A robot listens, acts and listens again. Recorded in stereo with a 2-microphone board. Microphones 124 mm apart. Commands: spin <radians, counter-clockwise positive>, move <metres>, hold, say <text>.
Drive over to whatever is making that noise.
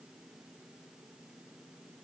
hold
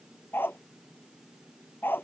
spin 0.26
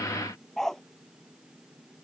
move 1.0
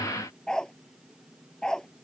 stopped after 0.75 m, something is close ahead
say Something is in my way. I am facing the dog barking but have not reached it.